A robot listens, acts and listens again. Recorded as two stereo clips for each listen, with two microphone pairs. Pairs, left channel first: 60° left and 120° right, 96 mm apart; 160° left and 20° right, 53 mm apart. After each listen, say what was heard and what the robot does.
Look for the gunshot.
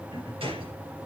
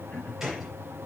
The gunshot: 105° right. Turn 105° right.
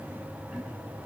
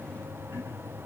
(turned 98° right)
I heard a gunshot from this way, but can't make it out now.